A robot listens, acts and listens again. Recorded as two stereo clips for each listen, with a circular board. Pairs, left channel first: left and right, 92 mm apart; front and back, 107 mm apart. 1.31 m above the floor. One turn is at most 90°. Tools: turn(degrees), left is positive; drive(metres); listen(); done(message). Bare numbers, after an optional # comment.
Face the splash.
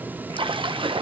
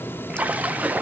# The splash: 105° right.
turn(-90)
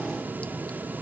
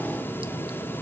# Nothing new. It was at 15° right.
turn(-15)
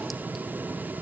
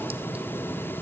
done("Facing where the splash came from. I can't hear it now.")